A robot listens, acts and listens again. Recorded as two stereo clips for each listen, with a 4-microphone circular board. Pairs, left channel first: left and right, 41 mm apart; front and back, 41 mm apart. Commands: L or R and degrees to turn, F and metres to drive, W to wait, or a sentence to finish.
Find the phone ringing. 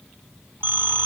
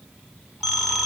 R95
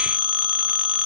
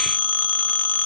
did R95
R20
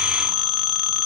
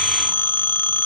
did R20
Found it: a phone ringing, straight ahead.